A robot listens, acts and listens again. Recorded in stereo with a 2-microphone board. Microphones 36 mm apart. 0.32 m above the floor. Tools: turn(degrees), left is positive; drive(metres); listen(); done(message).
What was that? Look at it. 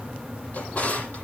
turn(degrees=45)
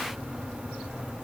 listen()
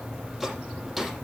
done("Found it: a drawer, straight ahead.")